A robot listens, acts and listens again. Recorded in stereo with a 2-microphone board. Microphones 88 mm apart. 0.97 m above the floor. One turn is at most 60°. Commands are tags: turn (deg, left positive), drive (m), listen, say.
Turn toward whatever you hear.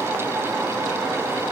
<listen/>
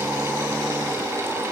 <listen/>
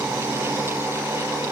<say>I can't make out anything.</say>